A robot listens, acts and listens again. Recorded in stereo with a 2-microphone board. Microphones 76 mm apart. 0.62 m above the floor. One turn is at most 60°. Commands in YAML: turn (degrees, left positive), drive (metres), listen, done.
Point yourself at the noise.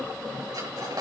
turn: -60
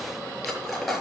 done: "Facing the cutlery clinking."